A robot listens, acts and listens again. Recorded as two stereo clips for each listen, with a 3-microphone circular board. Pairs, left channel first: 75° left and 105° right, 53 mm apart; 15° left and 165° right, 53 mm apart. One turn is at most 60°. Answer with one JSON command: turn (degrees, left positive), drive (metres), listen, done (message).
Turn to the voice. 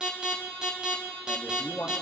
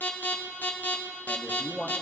{"turn": 60}
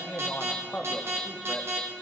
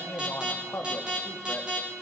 {"turn": 35}
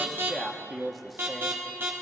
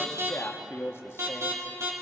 {"turn": -15}
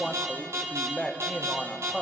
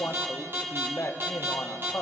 {"done": "Facing the man speaking, 1 to 2 m away."}